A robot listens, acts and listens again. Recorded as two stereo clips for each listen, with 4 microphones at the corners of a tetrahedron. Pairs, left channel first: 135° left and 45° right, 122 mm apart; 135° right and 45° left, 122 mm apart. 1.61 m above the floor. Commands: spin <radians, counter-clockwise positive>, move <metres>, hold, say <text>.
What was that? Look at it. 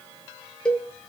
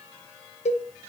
spin -2.53
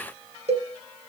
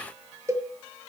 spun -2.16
spin -0.35
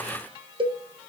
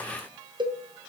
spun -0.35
say Facing the cowbell, 1 to 2 m away.